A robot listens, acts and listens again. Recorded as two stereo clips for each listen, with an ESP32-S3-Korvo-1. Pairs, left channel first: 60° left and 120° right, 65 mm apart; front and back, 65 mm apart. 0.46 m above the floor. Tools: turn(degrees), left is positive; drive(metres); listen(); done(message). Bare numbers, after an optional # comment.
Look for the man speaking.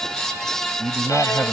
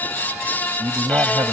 # The man speaking: 175° left.
turn(175)
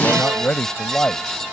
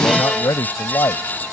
# The man speaking is now 10° right.
turn(-10)
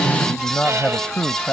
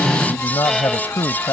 # The man speaking is now 15° right.
turn(-15)
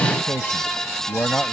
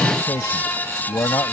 done("Facing the man speaking.")